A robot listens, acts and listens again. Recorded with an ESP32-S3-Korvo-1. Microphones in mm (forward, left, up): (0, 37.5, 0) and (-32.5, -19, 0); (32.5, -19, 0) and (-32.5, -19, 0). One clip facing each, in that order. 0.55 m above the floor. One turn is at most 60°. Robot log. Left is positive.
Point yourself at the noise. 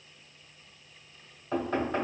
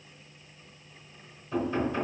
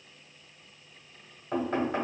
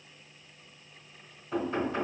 note: The knocking: 30° left.
cmd yaw +30
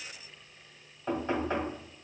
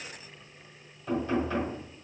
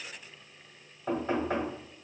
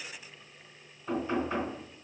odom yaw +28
end: Found it: knocking, straight ahead.